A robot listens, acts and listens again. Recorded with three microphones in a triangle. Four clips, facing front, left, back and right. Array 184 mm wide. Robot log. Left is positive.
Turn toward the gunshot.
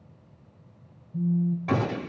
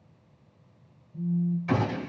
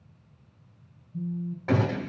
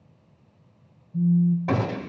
note: The gunshot: 95° right.
cmd yaw -95
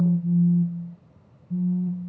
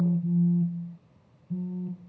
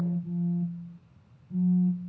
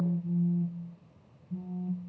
end: I heard a gunshot from this way, but can't make it out now.